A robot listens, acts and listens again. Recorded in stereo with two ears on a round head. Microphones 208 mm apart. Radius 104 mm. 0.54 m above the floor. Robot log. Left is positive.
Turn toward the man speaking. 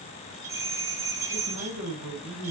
note: The man speaking: about 70° right or 110° right.
cmd yaw -70
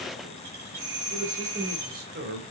note: So it is at 45° right.
cmd yaw -45
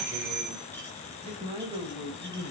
note: The man speaking is now 25° right.
cmd yaw -25
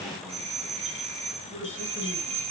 note: The man speaking is now 10° right.
cmd yaw -10
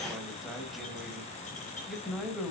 end: Facing the man speaking.